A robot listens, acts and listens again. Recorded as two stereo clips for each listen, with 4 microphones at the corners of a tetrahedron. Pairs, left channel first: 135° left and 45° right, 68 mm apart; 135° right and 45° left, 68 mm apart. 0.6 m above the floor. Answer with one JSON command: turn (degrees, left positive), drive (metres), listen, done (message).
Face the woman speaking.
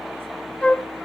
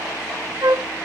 {"listen": true}
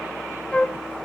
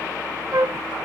{"listen": true}
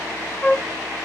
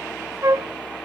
{"done": "I can't make out a woman speaking to turn to."}